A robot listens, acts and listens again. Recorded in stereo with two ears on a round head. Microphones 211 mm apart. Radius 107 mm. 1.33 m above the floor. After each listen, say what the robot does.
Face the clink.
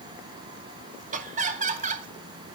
Keep listening.
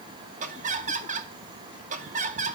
Keep listening.
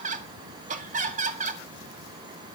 I can't make out a clink, only laughter.